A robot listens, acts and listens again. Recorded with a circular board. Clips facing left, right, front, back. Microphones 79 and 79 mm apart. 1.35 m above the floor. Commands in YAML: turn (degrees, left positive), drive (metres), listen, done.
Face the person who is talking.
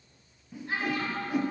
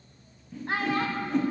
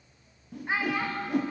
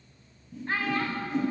turn: -75
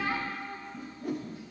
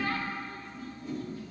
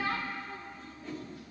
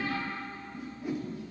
turn: 20
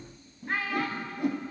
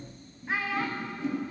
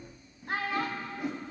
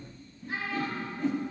done: "Found it: a child speaking, straight ahead."